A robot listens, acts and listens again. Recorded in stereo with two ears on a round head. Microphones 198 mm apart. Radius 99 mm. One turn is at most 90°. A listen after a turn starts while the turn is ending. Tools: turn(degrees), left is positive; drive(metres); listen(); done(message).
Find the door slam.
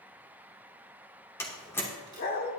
turn(degrees=30)
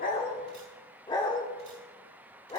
listen()
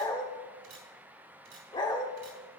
done("I heard a door slam, but can't make it out now. It was about 15° right or 135° left.")